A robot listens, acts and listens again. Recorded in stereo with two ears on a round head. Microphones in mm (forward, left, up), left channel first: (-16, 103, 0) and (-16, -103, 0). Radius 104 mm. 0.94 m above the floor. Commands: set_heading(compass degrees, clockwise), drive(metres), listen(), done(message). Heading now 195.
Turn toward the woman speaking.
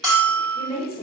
set_heading(170)
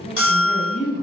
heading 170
set_heading(145)
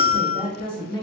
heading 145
set_heading(125)
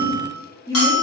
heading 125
set_heading(95)
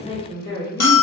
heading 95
set_heading(65)
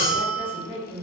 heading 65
set_heading(280)
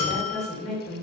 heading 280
set_heading(250)
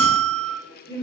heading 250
set_heading(235)
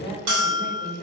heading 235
done("Found it: a woman speaking, straight ahead, 1 to 2 m away.")